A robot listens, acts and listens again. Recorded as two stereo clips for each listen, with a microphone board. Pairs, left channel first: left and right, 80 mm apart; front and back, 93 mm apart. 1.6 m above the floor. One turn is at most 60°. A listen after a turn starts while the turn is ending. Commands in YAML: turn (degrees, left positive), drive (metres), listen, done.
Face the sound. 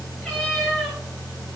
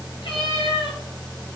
done: "Facing the cat meowing, over 4 m away."